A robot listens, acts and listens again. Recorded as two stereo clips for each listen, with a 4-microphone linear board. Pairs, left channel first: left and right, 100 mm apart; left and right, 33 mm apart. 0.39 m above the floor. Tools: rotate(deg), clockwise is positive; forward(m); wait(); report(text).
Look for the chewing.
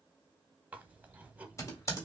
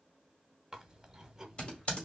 rotate(15)
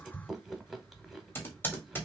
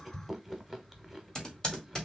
report("Facing the chewing, under 1 m away.")